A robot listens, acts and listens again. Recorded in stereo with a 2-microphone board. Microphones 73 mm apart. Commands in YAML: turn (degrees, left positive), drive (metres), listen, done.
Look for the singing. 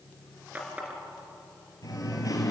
turn: 50
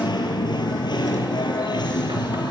turn: 80
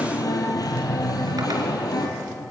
turn: 60
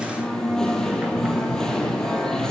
turn: 10
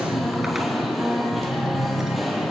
done: "Found it: singing, straight ahead."